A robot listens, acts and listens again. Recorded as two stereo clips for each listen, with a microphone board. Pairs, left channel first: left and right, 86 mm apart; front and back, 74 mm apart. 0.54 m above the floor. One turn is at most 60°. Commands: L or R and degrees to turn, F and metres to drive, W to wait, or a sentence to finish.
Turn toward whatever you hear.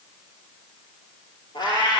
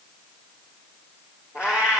L60
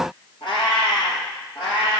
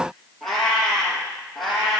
L60
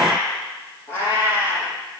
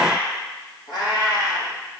L30
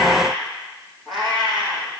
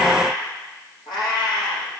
Facing the cat meowing, over 4 m away.